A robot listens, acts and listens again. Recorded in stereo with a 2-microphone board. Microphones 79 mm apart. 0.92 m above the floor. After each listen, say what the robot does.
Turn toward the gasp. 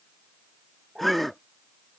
Turn 30° left.
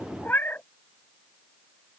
Keep listening.
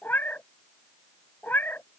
I heard a gasp, but can't make it out now. It was about 30° right or 150° left.